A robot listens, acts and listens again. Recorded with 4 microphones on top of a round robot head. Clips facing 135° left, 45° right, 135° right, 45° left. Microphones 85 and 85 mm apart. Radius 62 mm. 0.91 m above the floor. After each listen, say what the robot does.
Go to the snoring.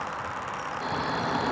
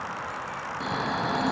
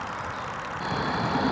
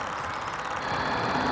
Turn 65° right.
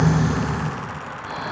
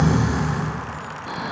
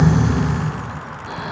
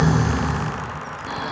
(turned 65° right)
Drive 1.0 m forward.
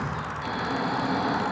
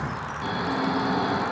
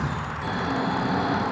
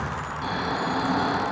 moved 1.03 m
Drive 1.0 m forward.
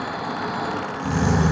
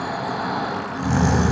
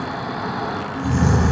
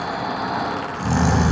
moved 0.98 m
Turn 15° left.
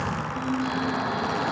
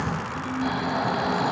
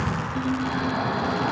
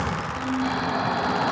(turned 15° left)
Drive 1.0 m forward.
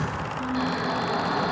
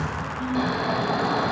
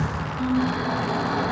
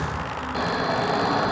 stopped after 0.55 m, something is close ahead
Turn 10° left.
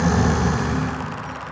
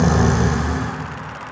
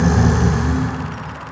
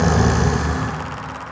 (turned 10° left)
Arrived at the snoring, straight ahead.